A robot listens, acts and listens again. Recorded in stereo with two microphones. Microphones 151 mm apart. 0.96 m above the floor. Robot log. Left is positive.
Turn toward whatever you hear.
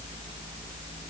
cmd idle
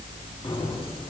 note: The keys jangling: about 35° left or 145° left.
cmd yaw +35
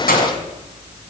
note: So it is at 105° left.
cmd yaw +105
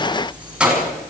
end: Found it: keys jangling, straight ahead, over 4 m away.